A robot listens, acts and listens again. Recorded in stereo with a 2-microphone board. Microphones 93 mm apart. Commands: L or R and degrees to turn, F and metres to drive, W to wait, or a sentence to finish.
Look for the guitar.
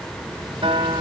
R70
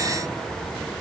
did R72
W
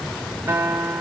R25
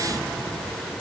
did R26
W
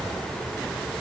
W
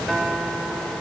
Found it: a guitar, straight ahead.